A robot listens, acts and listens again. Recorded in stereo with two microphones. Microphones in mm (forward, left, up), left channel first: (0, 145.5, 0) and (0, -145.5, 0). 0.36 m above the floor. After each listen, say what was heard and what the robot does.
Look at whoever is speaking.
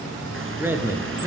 Turn 30° right.
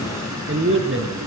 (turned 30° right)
So it is at 135° right. Turn 135° right.
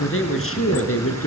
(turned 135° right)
The man speaking is now 50° left. Turn 50° left.
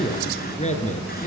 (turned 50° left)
The man speaking is now 25° left. Turn 25° left.
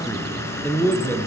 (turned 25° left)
Found it: a man speaking, straight ahead, over 4 m away.